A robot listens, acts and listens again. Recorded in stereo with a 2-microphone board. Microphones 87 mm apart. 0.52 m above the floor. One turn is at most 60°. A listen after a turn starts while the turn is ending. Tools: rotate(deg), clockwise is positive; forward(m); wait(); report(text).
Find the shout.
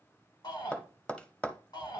rotate(-55)
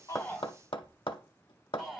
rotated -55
report("Facing the shout.")